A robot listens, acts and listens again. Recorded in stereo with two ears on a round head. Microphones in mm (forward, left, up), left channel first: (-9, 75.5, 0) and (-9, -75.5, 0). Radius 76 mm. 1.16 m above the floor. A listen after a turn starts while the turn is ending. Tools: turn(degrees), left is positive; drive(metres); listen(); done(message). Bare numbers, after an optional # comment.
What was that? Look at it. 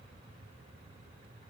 listen()
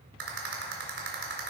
# The rattle: about 70° right or 110° right.
turn(-70)
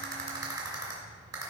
# So it is at 25° right.
turn(-25)
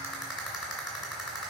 done("Found it: a rattle, straight ahead, 2 to 4 m away.")